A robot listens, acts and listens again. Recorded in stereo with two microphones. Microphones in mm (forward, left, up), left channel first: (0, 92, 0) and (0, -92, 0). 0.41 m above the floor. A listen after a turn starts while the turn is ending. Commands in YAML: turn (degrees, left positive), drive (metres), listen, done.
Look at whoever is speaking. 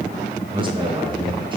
turn: -30
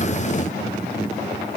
listen: true
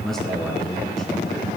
done: "Found it: a man speaking, straight ahead."